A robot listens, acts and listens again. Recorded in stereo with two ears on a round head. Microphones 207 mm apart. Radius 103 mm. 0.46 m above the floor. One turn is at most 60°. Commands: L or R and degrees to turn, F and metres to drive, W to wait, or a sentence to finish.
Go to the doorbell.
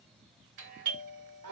R50
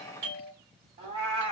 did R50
R60
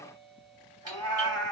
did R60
R20
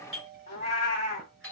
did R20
F1.0
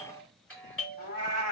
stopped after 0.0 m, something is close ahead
Blocked. The doorbell is further on, straight ahead.